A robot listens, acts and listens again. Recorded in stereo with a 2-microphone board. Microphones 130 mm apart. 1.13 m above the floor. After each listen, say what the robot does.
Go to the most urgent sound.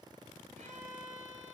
Keep listening.
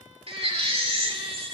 Turn 50° right.
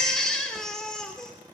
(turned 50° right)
Drive 1.0 m forward.
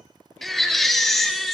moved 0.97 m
Drive 1.0 m forward.
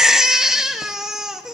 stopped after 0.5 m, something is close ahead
I am next to the baby crying.